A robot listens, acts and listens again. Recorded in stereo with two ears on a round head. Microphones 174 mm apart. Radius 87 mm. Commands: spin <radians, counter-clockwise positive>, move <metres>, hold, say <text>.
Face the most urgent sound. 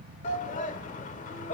spin 0.70
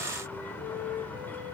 hold
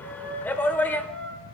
spin 0.17
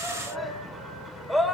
say Found it: a shout, straight ahead.